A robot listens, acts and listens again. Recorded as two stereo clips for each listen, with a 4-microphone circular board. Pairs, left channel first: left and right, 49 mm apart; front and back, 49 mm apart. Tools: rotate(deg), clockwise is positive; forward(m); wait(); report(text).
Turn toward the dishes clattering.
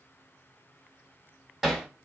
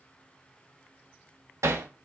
wait()
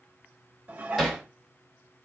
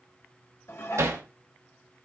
rotate(30)
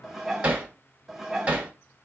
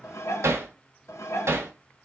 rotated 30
report("Found it: dishes clattering, straight ahead, under 1 m away.")